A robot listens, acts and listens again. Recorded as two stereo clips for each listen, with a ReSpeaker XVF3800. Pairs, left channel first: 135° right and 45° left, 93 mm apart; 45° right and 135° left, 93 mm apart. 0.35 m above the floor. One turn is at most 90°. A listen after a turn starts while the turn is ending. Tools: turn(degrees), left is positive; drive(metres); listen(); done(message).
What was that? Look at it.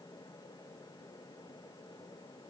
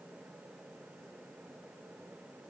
listen()
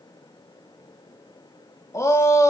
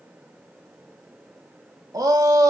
turn(degrees=90)
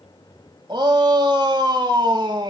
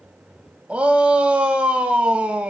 turn(degrees=60)
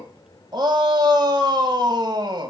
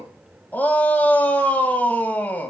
turn(degrees=25)
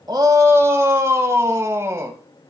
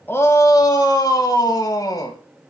done("Found it: a shout, straight ahead, 1 to 2 m away.")